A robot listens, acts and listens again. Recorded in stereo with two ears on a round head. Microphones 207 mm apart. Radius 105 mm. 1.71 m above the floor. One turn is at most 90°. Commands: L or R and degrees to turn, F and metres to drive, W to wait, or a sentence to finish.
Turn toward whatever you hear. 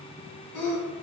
L75
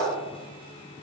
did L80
W
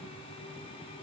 I heard a sneeze, but can't make it out now. It was about 5° right or 25° left.